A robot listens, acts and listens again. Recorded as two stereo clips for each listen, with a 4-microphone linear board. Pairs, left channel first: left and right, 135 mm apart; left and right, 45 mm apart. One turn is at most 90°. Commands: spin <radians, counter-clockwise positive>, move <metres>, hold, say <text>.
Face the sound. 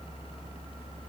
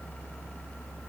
hold
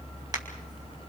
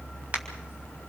spin -0.52
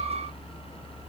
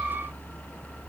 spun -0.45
hold
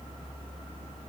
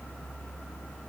say I heard a crack, but can't make it out now. It was about 5° right or 125° right.